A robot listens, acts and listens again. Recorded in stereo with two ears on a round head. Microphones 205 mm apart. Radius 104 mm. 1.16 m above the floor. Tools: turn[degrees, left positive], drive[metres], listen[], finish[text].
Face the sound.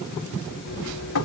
Action: turn[90]
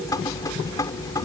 Thought: So it is at 15° left.
Action: turn[15]
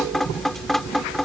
Action: finish[Found it: dripping, straight ahead.]